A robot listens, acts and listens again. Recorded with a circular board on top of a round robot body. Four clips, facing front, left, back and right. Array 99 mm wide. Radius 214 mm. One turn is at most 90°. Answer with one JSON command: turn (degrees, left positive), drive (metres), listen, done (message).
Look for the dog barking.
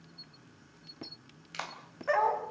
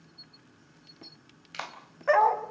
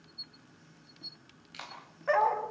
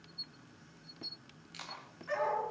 {"turn": 90}
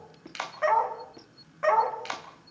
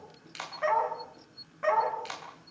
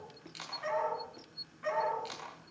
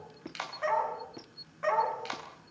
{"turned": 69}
{"done": "Facing the dog barking."}